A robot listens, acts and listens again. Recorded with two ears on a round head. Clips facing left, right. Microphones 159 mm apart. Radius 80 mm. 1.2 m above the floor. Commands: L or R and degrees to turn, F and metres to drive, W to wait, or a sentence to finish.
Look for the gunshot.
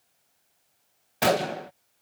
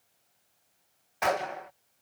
L40
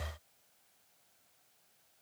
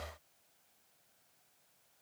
W
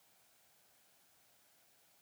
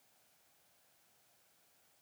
I heard a gunshot, but can't make it out now. It was about straight ahead or 100° left.